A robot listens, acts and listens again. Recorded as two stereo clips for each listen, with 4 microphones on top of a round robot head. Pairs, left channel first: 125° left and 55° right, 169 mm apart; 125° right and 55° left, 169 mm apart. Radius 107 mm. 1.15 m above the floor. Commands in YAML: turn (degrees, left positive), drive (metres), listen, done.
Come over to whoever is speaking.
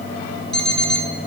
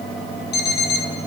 listen: true
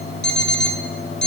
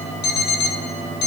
listen: true
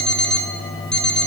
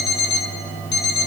done: "I can't make out anyone speaking, only an alarm clock."